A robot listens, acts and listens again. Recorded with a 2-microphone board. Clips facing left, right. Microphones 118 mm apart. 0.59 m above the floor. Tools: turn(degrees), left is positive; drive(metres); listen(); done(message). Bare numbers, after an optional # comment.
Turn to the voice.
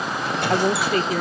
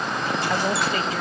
# The woman speaking: about 55° left or 125° left.
turn(55)
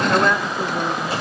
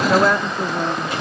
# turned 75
done("Facing the woman speaking, 1 to 2 m away.")